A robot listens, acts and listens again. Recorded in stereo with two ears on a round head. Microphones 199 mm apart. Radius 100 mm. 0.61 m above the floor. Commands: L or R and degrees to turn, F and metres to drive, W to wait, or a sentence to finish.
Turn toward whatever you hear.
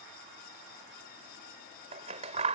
R30
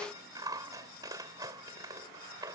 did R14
R20
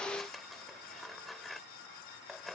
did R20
Facing the scissors.